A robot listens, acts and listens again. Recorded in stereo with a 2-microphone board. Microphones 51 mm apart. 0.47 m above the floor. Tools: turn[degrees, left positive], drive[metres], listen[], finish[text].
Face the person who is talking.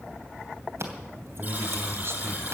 Thought: The man speaking: about 55° right or 125° right.
Action: turn[-55]
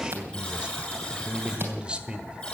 Thought: So it is at 25° right.
Action: turn[-25]
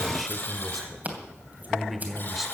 Action: finish[Facing the man speaking.]